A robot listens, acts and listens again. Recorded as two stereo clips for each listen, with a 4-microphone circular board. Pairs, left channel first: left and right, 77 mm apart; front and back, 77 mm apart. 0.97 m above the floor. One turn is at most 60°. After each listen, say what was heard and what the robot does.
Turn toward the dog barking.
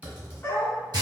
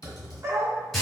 The dog barking: 140° left. Turn 60° left.
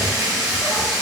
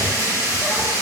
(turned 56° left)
Nothing new. It was at 85° left. Turn 60° left.
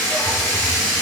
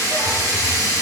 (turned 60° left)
Nothing new. It was at 25° left. Turn 25° left.
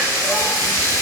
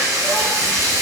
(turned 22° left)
Facing where the dog barking came from. I can't hear it now.